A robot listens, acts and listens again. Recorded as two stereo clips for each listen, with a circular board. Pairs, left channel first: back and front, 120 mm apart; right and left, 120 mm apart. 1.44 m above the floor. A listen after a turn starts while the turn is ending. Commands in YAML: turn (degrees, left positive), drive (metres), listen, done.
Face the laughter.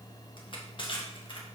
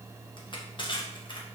listen: true
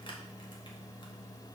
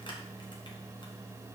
listen: true
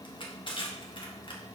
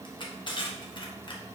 done: "I can't make out laughter, only crushing."